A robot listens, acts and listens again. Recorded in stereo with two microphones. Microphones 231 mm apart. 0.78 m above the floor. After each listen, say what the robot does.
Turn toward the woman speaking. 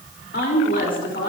Turn 55° left.
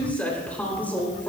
Turn 10° left.
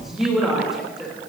Facing the woman speaking, over 4 m away.